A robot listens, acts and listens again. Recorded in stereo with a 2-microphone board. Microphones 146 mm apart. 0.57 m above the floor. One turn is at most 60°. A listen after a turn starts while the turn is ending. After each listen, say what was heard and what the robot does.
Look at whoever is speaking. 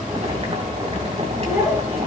Turn 30° right.
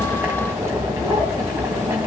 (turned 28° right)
Keep listening.
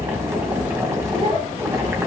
So it is at 135° right. Turn 60° right.
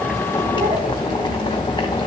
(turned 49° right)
Nothing new. It was at 90° right. Turn 60° right.
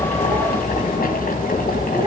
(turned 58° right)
Nothing new. It was at 30° right. Turn 30° right.
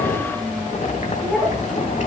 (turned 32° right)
Found it: a child speaking, straight ahead, over 4 m away.